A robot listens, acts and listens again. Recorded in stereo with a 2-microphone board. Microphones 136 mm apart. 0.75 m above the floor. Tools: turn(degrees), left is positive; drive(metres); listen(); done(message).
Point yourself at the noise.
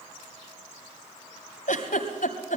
turn(degrees=90)
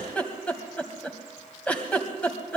turn(degrees=10)
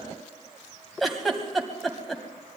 done("Facing the giggle.")